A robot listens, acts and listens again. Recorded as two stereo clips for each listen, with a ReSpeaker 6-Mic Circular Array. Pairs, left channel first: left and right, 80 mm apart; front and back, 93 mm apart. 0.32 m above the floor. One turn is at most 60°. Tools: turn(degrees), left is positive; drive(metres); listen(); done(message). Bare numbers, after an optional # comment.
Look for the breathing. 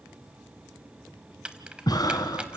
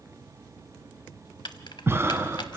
# The breathing: 120° left.
turn(60)
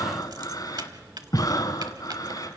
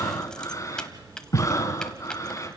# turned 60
# The breathing is now 55° left.
turn(55)
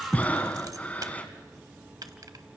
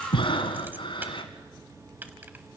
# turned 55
# The breathing is now 20° left.
turn(20)
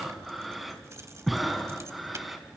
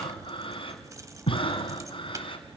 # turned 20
done("Facing the breathing, 1 to 2 m away.")